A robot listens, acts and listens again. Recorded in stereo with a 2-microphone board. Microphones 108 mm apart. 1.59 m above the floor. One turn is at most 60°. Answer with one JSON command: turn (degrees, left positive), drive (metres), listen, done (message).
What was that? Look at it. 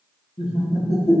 {"turn": 60}
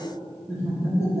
{"turn": 25}
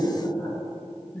{"turn": 20}
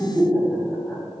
{"done": "Found it: laughter, straight ahead."}